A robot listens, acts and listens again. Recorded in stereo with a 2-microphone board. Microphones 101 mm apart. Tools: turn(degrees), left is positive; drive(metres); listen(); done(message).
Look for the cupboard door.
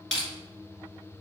listen()
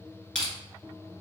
listen()
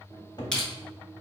turn(degrees=45)
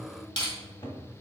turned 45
turn(degrees=75)
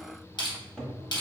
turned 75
done("Found it: a cupboard door, straight ahead, 1 to 2 m away.")